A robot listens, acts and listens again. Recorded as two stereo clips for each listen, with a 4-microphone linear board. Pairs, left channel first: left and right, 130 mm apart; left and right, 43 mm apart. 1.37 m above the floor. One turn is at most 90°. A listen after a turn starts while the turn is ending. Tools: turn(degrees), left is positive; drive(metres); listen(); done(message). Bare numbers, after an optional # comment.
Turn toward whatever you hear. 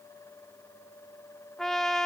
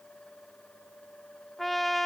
turn(30)
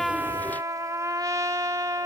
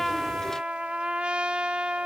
# So it is at 25° right.
turn(-25)
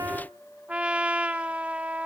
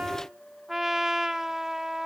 # The trumpet is now 10° right.
turn(-10)
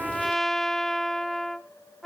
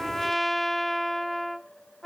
done("Found it: a trumpet, straight ahead.")